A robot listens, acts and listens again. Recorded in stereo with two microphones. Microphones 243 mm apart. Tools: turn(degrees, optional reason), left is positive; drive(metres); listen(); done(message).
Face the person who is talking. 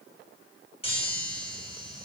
listen()
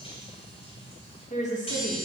turn(degrees=30, reason="The woman speaking: about 30° left or 150° left.")
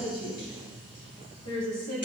turn(degrees=100, reason="So it is at 100° left.")
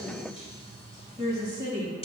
turn(degrees=-15, reason="The woman speaking is now 15° right.")
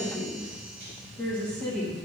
done("Found it: a woman speaking, straight ahead.")